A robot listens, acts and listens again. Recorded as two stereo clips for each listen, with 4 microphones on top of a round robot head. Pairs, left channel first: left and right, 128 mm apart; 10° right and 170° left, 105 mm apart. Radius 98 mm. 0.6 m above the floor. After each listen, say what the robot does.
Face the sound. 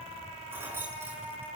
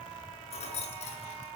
Turn 15° right.
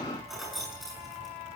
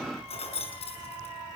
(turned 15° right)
Found it: keys jangling, straight ahead.